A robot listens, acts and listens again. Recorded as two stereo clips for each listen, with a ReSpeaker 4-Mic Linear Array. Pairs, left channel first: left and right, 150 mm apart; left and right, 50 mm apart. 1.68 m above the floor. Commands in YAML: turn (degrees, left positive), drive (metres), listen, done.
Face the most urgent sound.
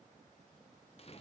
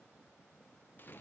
listen: true
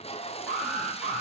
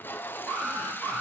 turn: 30
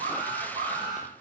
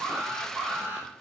turn: -35
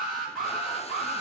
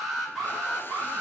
done: "Facing the alarm, over 4 m away."